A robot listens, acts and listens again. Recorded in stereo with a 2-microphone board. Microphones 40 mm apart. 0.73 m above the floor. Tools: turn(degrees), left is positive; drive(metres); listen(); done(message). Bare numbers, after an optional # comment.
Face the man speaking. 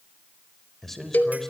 turn(30)
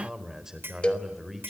# So it is at 10° right.
turn(-10)
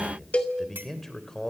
# The man speaking is now 10° left.
turn(10)
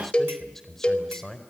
# The man speaking is now 10° left.
turn(10)
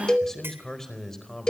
# The man speaking is now 10° left.
turn(10)
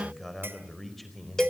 done("Facing the man speaking, over 4 m away.")